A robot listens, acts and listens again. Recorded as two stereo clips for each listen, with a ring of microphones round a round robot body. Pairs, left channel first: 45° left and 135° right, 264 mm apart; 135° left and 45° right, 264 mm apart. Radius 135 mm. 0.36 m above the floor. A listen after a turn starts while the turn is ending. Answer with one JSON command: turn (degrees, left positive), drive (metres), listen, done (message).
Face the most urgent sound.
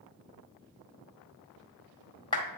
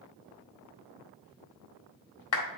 {"listen": true}
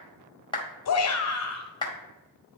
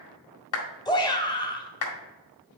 {"turn": 60}
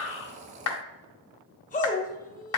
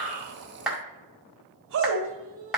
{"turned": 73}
{"turn": -10}
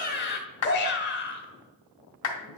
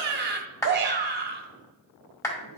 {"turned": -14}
{"done": "Facing the shout."}